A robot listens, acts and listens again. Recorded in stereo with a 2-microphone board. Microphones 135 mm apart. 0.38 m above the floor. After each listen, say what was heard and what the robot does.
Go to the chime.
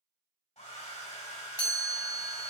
The chime: about 20° left or 160° left. Turn 20° left.
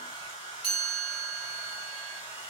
Drive 1.0 m forward.
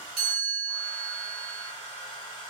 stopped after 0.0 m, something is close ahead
Blocked. The chime is further on, straight ahead.